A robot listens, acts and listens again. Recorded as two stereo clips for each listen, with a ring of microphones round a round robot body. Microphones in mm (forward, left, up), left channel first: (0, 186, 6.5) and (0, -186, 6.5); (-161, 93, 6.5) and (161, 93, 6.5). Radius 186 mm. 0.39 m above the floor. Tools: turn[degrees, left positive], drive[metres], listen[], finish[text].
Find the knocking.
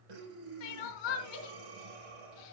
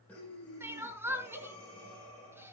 Action: listen[]
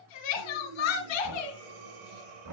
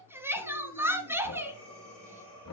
Thought: The knocking: 130° right.
Action: turn[-130]
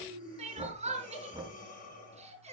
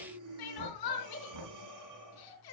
Thought: The knocking is now 15° right.
Action: turn[-15]
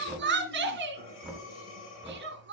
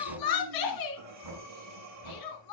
Action: finish[Facing the knocking, over 4 m away.]